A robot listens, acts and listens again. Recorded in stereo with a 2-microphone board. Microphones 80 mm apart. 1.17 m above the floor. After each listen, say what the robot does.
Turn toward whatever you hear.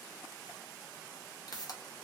Turn 55° left.
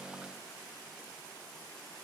Keep listening.
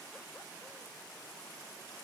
I heard a pop, but can't make it out now. It was about straight ahead or 70° left.